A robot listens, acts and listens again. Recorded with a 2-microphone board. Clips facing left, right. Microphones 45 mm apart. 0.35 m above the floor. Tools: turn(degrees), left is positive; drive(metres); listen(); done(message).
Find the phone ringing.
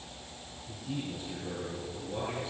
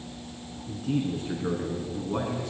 listen()
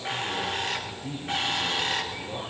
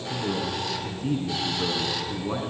listen()
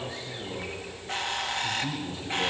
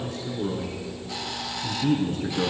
done("I can't make out a phone ringing, only a bird and a man speaking.")